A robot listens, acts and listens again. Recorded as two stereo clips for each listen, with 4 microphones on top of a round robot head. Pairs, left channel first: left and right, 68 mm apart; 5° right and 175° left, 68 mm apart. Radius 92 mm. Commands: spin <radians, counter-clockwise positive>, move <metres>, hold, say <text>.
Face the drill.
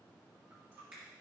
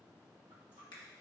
hold
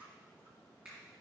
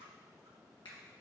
hold
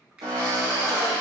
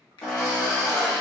spin -1.40
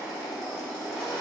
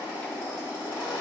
say Facing the drill.